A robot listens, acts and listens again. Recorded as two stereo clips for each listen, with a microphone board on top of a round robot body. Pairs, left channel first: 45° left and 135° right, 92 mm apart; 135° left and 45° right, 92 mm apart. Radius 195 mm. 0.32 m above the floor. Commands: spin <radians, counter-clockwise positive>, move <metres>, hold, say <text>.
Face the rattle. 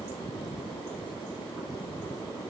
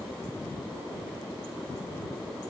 hold
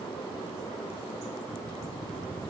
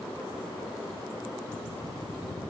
hold
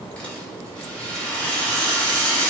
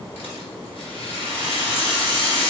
spin 2.18
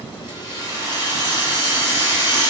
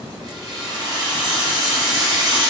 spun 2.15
say Facing the rattle.